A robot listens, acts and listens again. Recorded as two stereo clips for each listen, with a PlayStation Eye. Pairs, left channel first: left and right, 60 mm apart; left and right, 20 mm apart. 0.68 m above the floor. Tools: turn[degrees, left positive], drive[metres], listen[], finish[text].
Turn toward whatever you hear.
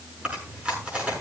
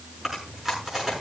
Thought: The chewing: about 20° right or 160° right.
Action: turn[-20]
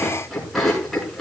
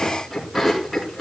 Action: finish[Facing the chewing, over 4 m away.]